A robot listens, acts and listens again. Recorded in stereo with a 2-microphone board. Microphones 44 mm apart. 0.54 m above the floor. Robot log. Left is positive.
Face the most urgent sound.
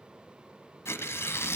cmd idle
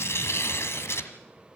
cmd idle
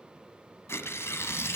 end: I can't make out anything urgent to turn to.